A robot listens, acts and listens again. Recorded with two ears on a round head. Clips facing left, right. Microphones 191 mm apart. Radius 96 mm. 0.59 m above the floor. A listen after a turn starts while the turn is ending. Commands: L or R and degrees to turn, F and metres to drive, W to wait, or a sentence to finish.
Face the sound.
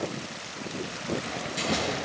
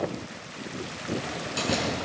R65
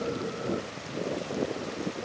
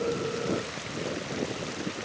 W
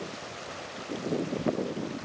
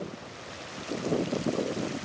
I heard a door slam, but can't make it out now. It was about straight ahead or 50° right.